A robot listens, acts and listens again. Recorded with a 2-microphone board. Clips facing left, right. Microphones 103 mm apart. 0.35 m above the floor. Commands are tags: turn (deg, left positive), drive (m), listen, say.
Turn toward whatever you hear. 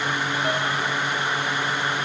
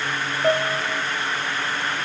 <turn deg="-55"/>
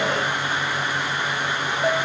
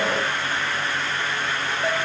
<say>Facing the piano, 2 to 4 m away.</say>